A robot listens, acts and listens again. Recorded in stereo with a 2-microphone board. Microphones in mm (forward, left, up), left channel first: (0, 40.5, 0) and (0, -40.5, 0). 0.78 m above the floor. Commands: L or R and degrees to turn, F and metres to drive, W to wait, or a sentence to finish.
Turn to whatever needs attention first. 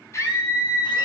L35
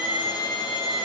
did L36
L105
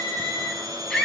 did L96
L10
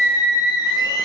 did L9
Found it: a scream, straight ahead, over 4 m away.